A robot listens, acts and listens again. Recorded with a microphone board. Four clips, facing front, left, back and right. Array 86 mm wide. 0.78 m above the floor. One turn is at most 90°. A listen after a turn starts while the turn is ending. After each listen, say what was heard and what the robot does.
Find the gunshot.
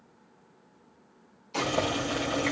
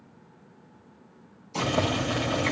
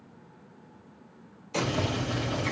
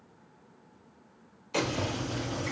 The gunshot: 110° right. Turn 90° right.
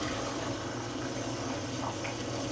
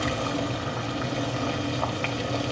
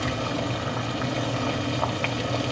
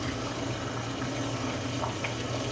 Nothing new. It was at 20° right. Turn 20° right.
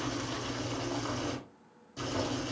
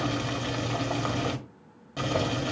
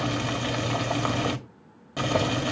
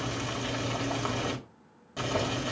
I heard a gunshot from this way, but can't make it out now.